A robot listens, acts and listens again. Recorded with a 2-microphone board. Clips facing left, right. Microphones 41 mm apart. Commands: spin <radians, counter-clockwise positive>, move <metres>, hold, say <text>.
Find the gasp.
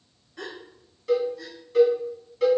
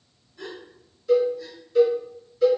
spin 1.22
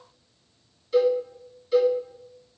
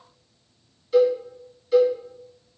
hold
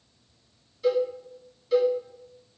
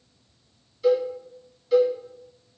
say I heard a gasp, but can't make it out now. It was about straight ahead or 40° left.